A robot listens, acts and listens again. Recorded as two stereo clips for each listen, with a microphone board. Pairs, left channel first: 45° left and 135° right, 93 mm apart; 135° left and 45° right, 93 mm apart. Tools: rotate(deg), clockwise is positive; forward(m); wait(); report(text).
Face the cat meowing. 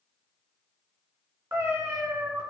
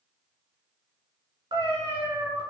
rotate(85)
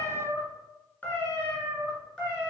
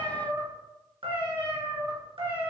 rotate(40)
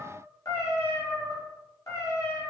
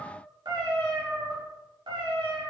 report("Found it: a cat meowing, straight ahead.")